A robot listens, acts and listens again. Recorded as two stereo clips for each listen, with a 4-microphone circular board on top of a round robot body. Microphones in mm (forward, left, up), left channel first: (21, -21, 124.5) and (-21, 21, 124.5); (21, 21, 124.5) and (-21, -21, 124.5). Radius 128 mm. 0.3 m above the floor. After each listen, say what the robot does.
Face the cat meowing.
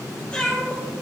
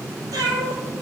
Turn 115° right.
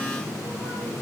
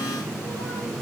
Keep listening.
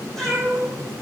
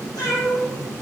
Turn 40° left.
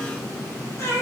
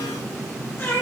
Found it: a cat meowing, straight ahead, over 4 m away.